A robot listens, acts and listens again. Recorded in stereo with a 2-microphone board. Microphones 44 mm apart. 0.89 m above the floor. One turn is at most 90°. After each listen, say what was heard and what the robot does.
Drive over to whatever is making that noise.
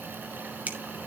The finger snap: about 35° right or 145° right. Turn 35° right.
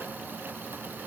Keep listening.
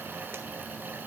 Keep listening.
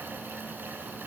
I heard a finger snap, but can't make it out now. It was about straight ahead or 110° right. I did not reach it.